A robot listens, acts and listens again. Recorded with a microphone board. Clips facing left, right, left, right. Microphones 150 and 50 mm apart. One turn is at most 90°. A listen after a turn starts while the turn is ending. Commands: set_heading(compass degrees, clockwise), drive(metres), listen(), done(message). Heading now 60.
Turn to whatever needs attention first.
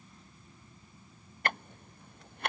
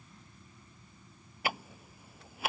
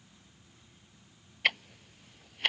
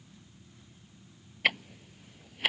listen()
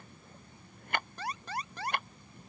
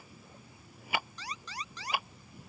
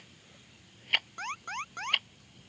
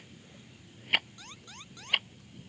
set_heading(5)
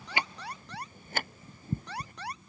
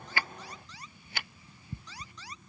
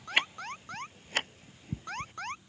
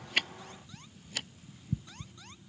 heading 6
set_heading(301)
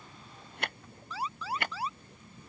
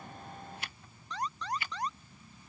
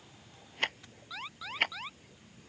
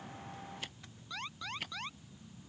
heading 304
done("Found it: an alarm, straight ahead.")